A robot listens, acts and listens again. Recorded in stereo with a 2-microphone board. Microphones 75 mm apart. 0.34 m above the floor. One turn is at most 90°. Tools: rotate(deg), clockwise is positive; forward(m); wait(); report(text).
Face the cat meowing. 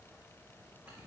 wait()
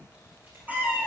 rotate(25)
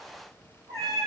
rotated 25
rotate(90)
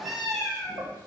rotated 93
report("Found it: a cat meowing, straight ahead.")